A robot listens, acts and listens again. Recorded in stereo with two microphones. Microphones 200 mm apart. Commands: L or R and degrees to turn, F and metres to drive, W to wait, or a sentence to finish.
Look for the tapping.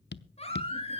L60
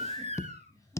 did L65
L15
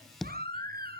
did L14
Found it: tapping, straight ahead.